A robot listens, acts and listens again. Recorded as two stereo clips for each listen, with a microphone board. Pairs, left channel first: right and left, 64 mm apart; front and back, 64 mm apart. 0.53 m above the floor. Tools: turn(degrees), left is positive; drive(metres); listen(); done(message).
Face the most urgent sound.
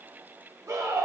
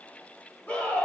turn(degrees=65)
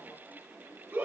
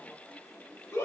turn(degrees=35)
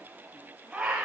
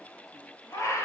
turn(degrees=15)
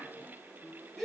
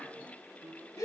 done("Facing the scream.")